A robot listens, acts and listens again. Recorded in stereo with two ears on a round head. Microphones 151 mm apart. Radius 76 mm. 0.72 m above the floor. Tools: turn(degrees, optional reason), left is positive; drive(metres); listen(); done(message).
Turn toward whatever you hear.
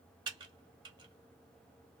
turn(degrees=-25, reason="The typing on a keyboard: about 25° right or 155° right.")
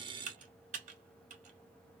turn(degrees=-120, reason="So it is at 120° right.")
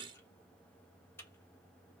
turn(degrees=15, reason="The typing on a keyboard is now 15° left.")
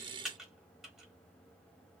done("Found it: typing on a keyboard, straight ahead.")